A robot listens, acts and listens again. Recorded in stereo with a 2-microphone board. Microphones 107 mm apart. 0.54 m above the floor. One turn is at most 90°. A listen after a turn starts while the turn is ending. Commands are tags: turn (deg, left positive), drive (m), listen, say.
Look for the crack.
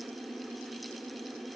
<listen/>
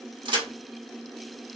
<turn deg="-45"/>
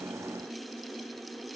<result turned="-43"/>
<listen/>
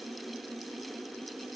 <say>I heard a crack, but can't make it out now. It was about straight ahead or 95° right.</say>